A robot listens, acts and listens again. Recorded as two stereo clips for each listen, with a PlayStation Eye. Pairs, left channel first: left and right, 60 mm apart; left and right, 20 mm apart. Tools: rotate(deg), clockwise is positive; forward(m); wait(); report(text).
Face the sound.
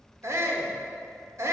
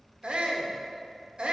rotate(55)
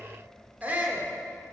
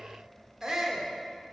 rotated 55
rotate(35)
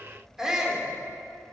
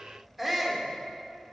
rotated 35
rotate(10)
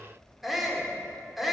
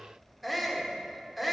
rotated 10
report("Facing the shout.")